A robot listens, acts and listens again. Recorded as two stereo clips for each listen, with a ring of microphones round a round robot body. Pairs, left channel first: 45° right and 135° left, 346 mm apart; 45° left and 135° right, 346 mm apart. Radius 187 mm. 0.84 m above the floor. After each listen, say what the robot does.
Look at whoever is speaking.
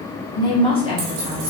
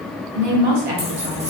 Turn 120° right.
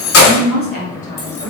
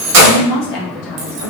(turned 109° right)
Turn 30° left.
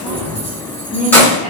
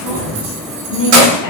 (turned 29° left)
Turn 25° left.
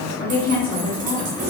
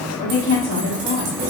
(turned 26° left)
Found it: a woman speaking, straight ahead, 1 to 2 m away.